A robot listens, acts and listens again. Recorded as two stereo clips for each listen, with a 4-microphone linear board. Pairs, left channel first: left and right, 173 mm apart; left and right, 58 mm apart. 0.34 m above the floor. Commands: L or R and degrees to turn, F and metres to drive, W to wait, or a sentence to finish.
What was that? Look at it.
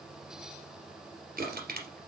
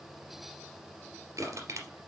R65
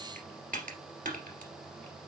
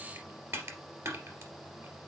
R55
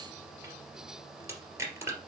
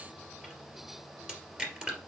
R15
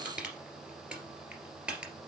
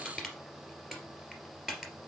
Found it: crushing, straight ahead.